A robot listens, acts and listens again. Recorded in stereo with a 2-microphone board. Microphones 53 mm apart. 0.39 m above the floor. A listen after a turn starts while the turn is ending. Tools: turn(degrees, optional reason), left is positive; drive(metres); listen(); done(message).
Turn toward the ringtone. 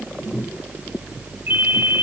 turn(degrees=-45, reason="The ringtone: about 45° right or 135° right.")
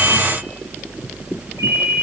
turn(degrees=-90, reason="So it is at 90° right.")
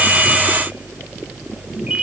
listen()
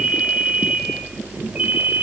turn(degrees=-25, reason="The ringtone is now 25° right.")
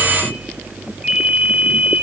done("Found it: a ringtone, straight ahead.")